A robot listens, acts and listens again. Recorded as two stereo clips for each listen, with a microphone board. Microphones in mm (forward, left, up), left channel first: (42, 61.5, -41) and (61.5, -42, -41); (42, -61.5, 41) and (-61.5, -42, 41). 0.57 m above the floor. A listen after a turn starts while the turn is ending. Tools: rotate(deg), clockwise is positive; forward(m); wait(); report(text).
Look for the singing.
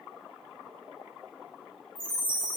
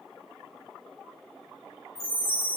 wait()
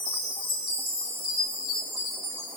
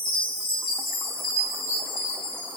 wait()
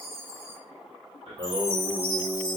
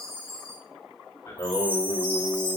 rotate(50)
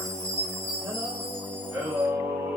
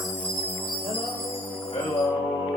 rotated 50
rotate(10)
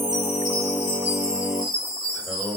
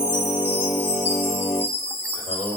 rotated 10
report("Found it: singing, straight ahead.")